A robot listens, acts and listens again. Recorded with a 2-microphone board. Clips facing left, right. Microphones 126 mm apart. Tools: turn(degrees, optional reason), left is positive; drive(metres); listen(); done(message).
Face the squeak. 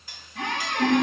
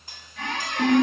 turn(degrees=60, reason="The squeak: about 60° left or 120° left.")
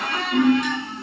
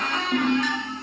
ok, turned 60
turn(degrees=10, reason="So it is at 10° left.")
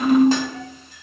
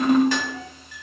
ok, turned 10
listen()
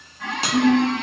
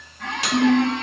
done("Found it: a squeak, straight ahead, 1 to 2 m away.")